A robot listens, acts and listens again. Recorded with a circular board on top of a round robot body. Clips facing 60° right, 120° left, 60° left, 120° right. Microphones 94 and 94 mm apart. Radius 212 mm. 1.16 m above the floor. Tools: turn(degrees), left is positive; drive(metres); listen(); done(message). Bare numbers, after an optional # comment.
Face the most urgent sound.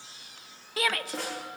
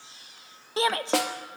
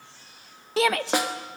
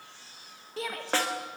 # The shout: 55° left.
turn(55)
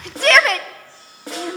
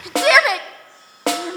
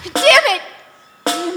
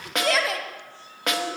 # The shout is now 40° left.
turn(40)
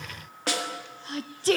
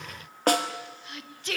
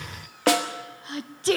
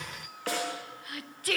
done("Found it: a shout, straight ahead.")